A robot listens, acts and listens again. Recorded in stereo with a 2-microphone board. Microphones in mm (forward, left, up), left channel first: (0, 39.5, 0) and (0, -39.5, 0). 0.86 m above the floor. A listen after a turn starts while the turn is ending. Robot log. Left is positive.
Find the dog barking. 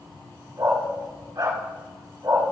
note: The dog barking: about 55° right or 125° right.
cmd yaw -55
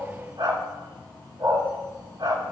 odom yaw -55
note: So it is at 65° right.
cmd yaw -65
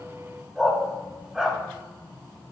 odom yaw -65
end: Facing the dog barking, 2 to 4 m away.